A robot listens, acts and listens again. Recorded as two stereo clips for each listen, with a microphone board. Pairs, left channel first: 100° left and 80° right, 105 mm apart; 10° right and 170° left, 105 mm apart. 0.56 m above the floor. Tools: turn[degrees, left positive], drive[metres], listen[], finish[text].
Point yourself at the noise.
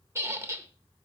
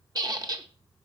Thought: The squeak: 140° right.
Action: turn[-140]
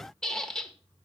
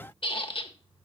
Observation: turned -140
Thought: The squeak is now 15° left.
Action: turn[15]
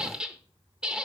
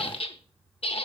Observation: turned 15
Action: finish[Facing the squeak, under 1 m away.]